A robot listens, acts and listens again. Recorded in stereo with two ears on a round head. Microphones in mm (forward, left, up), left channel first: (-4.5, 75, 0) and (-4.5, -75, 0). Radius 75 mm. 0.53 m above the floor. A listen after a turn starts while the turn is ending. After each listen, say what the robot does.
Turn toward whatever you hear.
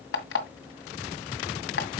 Turn 70° left.
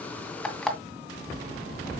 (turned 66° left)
Found it: an alarm clock, straight ahead.